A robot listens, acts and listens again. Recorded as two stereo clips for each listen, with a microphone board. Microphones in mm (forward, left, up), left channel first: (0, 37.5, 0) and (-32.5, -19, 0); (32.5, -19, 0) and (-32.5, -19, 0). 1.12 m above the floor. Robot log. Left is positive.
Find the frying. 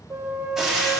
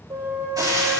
note: The frying: 155° left.
cmd yaw +155
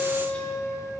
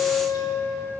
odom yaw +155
cmd idle
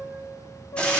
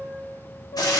note: The frying is now 10° right.
cmd yaw -10
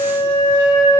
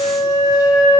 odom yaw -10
cmd idle
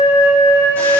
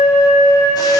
cmd idle
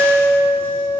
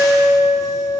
end: I heard frying from this way, but can't make it out now.